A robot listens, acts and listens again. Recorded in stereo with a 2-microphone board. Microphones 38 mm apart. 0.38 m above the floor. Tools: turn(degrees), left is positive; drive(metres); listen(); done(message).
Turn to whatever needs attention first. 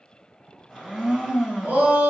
turn(degrees=-45)
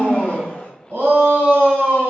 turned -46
turn(degrees=-85)
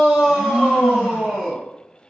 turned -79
done("Found it: a shout, straight ahead, 1 to 2 m away.")